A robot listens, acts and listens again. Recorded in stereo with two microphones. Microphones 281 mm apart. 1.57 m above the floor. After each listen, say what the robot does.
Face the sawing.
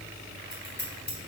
Keep listening.
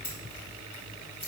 Keep listening.
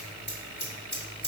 I can't make out sawing, only scissors.